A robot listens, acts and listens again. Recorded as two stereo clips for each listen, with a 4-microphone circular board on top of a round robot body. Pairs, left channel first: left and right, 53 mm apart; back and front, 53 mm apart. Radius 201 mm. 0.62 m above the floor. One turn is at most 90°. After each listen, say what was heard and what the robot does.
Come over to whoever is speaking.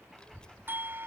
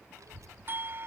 The child speaking: 15° left. Turn 15° left.
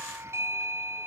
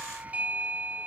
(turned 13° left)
Keep listening.
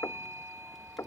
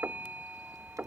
Drive 1.0 m forward.
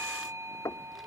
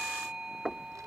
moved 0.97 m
Drive 1.0 m forward.
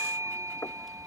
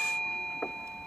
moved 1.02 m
Drive 1.0 m forward.
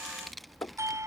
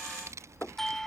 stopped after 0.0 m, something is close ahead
Arrived at the child speaking, straight ahead.